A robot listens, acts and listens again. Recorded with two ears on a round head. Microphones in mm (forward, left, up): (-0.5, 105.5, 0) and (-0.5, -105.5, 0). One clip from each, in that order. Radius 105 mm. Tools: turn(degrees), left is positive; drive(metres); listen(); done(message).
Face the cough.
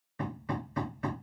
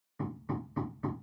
listen()
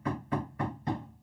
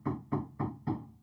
listen()
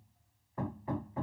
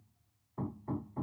done("I can't make out a cough, only hammering.")